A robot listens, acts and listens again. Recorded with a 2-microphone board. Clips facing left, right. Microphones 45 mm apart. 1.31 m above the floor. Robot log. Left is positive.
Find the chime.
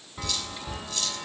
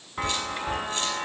note: The chime: about 40° right or 140° right.
cmd yaw -40
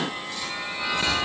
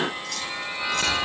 end: Facing the chime, under 1 m away.